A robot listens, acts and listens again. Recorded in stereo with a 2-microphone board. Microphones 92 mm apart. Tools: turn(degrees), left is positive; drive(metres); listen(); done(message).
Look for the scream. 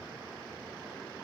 listen()
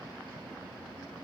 listen()
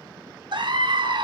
turn(degrees=-60)
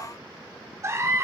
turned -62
turn(degrees=-35)
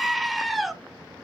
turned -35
done("Facing the scream.")